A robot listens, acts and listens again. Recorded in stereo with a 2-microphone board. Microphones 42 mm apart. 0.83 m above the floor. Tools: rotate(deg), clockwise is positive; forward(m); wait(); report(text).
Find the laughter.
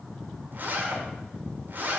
wait()
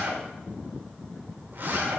wait()
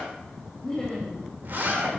rotate(-30)
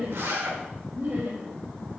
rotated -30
rotate(45)
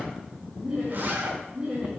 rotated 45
rotate(25)
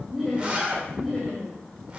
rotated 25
report("Facing the laughter.")